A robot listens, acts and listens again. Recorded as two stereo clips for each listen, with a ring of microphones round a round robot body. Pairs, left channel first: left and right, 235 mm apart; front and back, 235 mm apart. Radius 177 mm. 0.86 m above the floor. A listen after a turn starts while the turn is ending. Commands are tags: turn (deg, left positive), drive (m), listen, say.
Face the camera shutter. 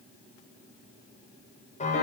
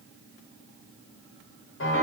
<listen/>
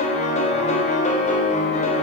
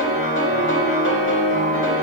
<listen/>
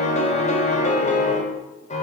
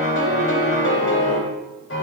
<say>I can't make out a camera shutter, only a piano.</say>